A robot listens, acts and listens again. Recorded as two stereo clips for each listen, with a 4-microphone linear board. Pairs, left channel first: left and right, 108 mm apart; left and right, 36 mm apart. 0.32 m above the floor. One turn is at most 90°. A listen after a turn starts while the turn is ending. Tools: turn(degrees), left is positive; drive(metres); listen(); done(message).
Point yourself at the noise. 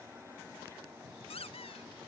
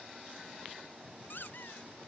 turn(degrees=65)
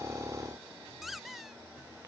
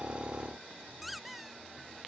done("Found it: a squeak, straight ahead.")